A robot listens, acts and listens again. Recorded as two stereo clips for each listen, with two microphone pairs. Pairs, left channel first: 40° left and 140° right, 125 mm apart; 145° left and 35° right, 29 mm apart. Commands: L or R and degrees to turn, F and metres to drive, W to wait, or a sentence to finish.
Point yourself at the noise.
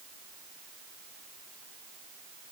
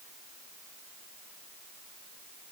W
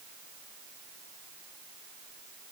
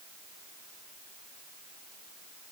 W
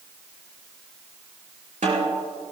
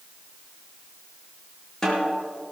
R145
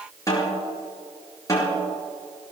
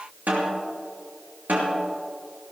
R20
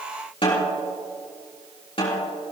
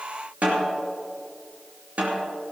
Facing the snare drum.